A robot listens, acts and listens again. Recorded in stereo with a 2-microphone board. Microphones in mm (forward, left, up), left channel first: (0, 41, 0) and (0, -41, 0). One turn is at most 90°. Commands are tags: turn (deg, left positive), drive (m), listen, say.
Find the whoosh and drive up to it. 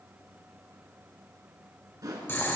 <turn deg="-50"/>
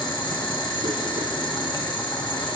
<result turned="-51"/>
<listen/>
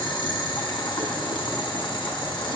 <listen/>
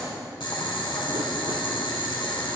<say>I heard a whoosh, but can't make it out now. It was about 5° left or 80° right. I did not reach it.</say>